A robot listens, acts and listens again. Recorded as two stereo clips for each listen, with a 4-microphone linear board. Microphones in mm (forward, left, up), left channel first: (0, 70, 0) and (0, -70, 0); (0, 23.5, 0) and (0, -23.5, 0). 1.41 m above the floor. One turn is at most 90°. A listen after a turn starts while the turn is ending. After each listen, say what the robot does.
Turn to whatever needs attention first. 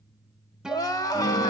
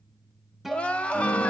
Turn 25° left.
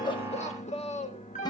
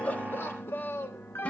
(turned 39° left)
Turn 90° left.
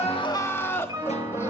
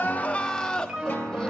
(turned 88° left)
Turn 20° left.
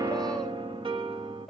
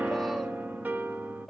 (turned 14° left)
Keep listening.
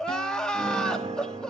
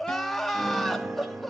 Facing the crying.